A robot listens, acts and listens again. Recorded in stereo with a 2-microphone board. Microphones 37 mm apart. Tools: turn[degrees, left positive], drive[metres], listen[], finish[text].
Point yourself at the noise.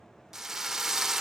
Thought: The drill: about 15° right or 165° right.
Action: turn[-15]
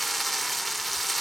Action: finish[Facing the drill, under 1 m away.]